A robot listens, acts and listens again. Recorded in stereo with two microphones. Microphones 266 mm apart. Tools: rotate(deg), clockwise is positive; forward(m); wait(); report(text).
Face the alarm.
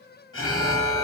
rotate(-50)
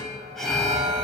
report("Facing the alarm, 1 to 2 m away.")